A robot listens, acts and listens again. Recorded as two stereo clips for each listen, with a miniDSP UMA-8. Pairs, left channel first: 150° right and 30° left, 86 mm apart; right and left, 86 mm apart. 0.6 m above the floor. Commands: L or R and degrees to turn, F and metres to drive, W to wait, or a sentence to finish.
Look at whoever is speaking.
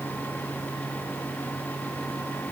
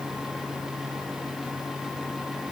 W
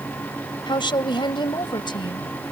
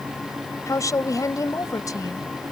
R135
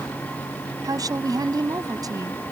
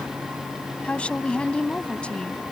R15
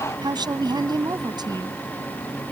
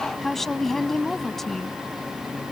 Found it: a woman speaking, straight ahead.